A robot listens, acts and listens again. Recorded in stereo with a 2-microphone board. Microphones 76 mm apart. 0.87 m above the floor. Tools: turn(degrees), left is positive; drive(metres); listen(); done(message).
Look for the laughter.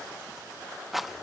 listen()
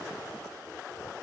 listen()
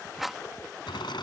turn(degrees=90)
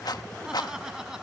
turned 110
done("Found it: laughter, straight ahead.")